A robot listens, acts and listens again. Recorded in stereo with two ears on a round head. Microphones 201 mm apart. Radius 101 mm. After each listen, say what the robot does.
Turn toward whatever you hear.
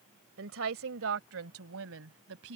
Turn 70° right.
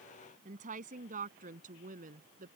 Turn 40° right.
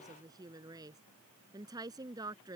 Turn 20° right.
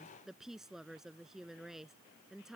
Found it: a woman speaking, straight ahead.